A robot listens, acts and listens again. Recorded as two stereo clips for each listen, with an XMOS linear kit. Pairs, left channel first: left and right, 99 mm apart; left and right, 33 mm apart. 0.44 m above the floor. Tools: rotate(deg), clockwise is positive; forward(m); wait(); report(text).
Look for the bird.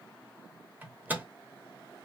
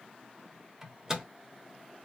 wait()
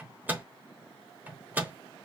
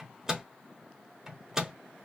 wait()
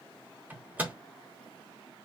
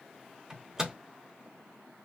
report("I can't make out a bird to turn to.")